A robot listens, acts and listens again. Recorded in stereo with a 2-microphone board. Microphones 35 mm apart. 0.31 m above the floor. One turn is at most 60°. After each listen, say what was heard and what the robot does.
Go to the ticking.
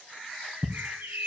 The ticking: about 45° left or 135° left. Turn 45° left.
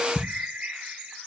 Drive 1.0 m forward.
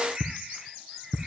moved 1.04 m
Drive 1.0 m forward.
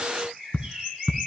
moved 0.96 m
The ticking is now 10° right. Turn 10° right.
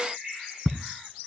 Drive 1.0 m forward.
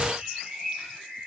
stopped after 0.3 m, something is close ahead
Keep listening.
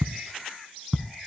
Arrived at the ticking, straight ahead.